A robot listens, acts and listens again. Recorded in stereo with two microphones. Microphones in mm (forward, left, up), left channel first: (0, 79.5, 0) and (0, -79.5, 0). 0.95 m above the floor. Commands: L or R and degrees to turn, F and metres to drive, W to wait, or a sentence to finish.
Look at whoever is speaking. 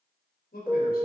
L90
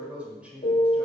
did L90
R10
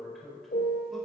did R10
Found it: a man speaking, straight ahead.